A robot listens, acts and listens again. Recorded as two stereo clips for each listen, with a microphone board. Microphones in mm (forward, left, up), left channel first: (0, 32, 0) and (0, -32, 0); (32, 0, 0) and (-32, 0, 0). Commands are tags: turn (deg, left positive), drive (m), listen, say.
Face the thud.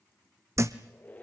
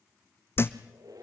<turn deg="-50"/>
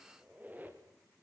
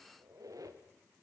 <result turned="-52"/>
<say>I heard a thud from this way, but can't make it out now.</say>